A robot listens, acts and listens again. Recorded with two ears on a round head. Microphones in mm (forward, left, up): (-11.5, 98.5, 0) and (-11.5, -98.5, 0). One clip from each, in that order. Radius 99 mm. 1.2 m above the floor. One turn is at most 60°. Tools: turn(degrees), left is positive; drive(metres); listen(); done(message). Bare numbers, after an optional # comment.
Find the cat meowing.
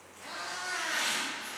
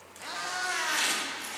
# The cat meowing: about 35° right or 145° right.
turn(-35)
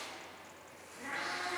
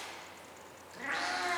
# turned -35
# So it is at 105° right.
turn(-60)
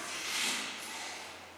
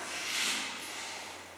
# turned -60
# Nothing new. It was at 45° right.
turn(-45)
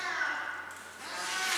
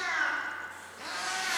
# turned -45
# The cat meowing is now 20° right.
turn(-20)
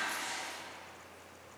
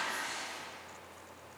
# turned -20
listen()
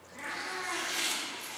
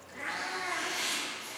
# The cat meowing is now 10° right.
turn(-10)
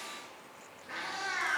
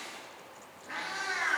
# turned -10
done("Found it: a cat meowing, straight ahead.")